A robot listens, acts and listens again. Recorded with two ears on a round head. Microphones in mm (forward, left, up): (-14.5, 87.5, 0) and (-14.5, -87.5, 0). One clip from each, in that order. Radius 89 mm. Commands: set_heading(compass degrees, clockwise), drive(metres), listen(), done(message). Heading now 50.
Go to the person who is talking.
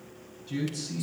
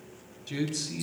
set_heading(110)
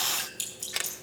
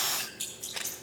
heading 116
listen()
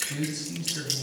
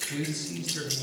drive(1.0)
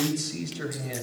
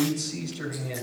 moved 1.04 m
set_heading(101)
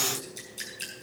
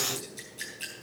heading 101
listen()
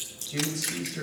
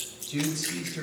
drive(1.0)
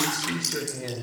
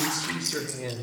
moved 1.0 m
drive(1.0)
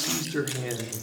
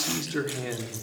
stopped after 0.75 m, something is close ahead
done("I am next to the man speaking.")